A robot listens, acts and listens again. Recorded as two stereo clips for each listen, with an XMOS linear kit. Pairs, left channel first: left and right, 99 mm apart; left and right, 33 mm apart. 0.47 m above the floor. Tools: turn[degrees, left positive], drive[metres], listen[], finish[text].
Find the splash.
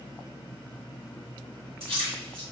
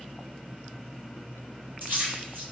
Thought: The splash: about 65° right or 115° right.
Action: turn[-65]
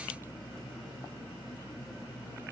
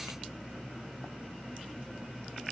Action: listen[]
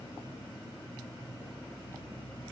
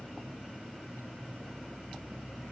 Action: finish[I heard a splash, but can't make it out now. It was about straight ahead or 50° right.]